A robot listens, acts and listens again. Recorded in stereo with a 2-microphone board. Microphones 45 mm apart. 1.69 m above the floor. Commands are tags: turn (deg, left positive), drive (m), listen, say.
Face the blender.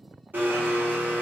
<turn deg="-45"/>
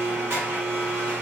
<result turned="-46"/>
<turn deg="-90"/>
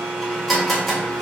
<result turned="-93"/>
<say>Facing the blender, under 1 m away.</say>